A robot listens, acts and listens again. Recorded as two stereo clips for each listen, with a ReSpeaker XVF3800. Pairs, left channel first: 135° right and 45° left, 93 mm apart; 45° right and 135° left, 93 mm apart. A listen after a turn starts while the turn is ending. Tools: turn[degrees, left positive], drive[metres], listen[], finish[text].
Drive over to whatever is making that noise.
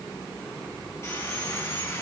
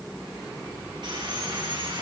Thought: The sawing: 165° left.
Action: turn[165]
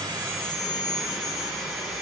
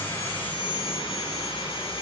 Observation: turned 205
Thought: The sawing is now 40° right.
Action: turn[-40]
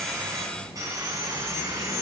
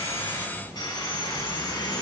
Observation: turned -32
Action: drive[1.0]
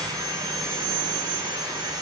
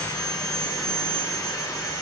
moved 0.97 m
Action: drive[1.0]
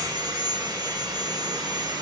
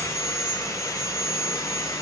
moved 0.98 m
Action: drive[1.0]
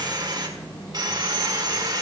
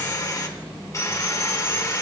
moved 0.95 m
Thought: The sawing is now 10° left.
Action: turn[10]
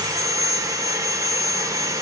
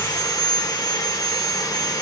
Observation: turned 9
Action: drive[1.0]
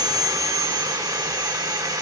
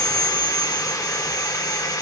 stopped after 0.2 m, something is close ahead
Action: finish[Arrived at the sawing, straight ahead.]